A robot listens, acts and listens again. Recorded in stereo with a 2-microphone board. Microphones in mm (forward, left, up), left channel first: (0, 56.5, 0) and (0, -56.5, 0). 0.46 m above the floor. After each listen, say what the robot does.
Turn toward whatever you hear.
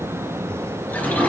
Turn 15° left.
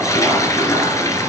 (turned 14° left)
Turn 150° left.
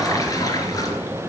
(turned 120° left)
Turn 30° left.
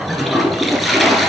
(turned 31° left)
Facing the toilet flushing, 2 to 4 m away.